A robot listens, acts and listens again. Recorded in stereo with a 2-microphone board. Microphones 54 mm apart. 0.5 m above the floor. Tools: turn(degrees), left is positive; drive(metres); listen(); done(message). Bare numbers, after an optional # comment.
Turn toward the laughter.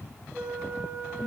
listen()
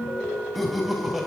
turn(-30)
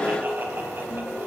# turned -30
listen()
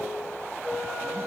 listen()
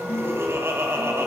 # So it is at 125° right.
turn(-125)
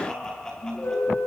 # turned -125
# The laughter is now 10° left.
turn(10)
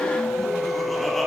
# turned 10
listen()
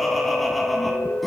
done("Found it: laughter, straight ahead, over 4 m away.")